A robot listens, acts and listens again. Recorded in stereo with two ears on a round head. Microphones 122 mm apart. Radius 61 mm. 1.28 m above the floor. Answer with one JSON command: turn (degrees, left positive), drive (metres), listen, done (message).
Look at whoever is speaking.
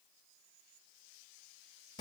{"listen": true}
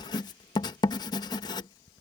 {"listen": true}
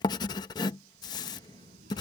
{"turn": -65}
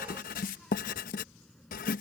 {"done": "Found it: a child speaking, straight ahead."}